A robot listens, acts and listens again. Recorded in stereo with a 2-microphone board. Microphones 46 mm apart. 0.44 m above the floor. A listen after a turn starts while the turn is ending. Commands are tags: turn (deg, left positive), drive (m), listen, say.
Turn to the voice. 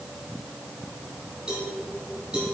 <listen/>
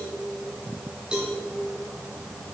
<listen/>
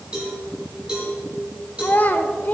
<turn deg="40"/>
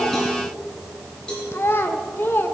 <turn deg="90"/>
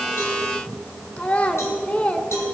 <turn deg="35"/>
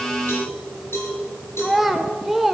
<say>Facing the child speaking.</say>